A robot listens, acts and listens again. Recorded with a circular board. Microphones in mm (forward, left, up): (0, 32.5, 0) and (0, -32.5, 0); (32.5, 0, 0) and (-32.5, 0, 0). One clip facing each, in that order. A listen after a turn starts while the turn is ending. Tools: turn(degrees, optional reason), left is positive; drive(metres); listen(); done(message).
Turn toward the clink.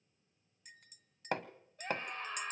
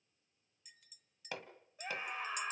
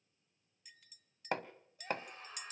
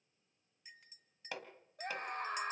turn(degrees=120, reason="The clink: 120° left.")
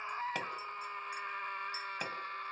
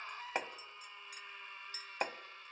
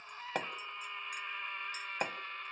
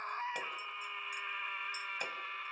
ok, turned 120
listen()
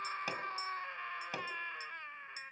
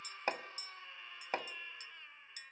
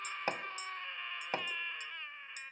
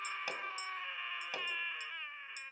listen()
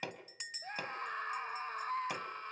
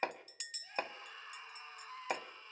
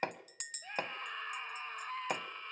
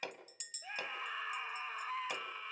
turn(degrees=25, reason="The clink is now 25° left.")
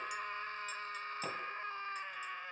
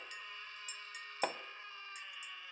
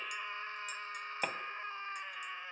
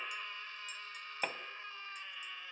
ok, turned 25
listen()
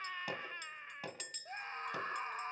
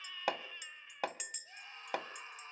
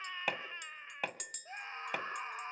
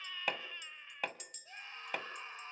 turn(degrees=-15, reason="The clink is now 15° right.")
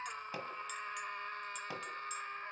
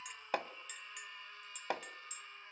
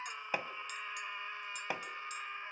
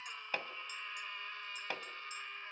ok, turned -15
listen()
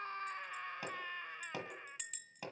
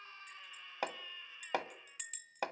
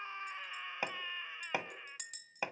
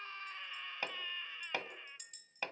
done("Found it: a clink, straight ahead.")